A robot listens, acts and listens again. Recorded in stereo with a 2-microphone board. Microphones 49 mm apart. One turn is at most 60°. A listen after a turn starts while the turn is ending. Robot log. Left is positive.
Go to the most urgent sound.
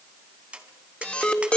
note: The alarm: about 25° left or 155° left.
cmd yaw +25
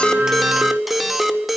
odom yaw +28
cmd fwd 1.0
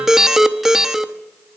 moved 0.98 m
note: The alarm is now 10° right.
cmd yaw -10
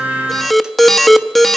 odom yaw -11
cmd fwd 1.0
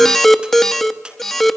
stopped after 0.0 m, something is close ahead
end: Arrived at the alarm, straight ahead.